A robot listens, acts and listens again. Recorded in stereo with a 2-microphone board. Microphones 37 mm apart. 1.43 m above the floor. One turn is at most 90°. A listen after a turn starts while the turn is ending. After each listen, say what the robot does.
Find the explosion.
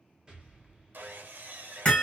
Turn 25° right.
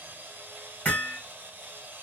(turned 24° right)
Keep listening.
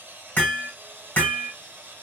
I heard an explosion, but can't make it out now. It was about straight ahead or 130° right.